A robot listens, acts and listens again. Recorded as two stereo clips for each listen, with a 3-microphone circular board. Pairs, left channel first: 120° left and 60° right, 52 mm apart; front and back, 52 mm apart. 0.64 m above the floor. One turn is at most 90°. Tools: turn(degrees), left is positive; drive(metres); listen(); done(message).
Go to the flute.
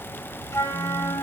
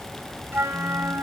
turn(degrees=90)
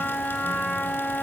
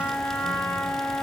turn(degrees=45)
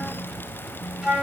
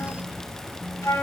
turn(degrees=15)
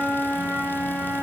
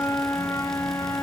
drive(metres=1.0)
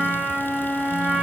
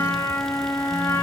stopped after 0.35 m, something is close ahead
turn(degrees=10)
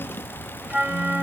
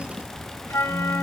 done("Blocked. The flute is further on, straight ahead.")